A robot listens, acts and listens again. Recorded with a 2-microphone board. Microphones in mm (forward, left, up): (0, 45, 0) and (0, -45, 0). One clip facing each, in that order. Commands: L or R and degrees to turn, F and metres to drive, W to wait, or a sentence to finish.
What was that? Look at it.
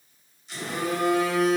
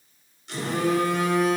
R90
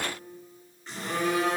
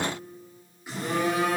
R10
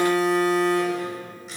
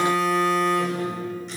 Facing the phone buzzing.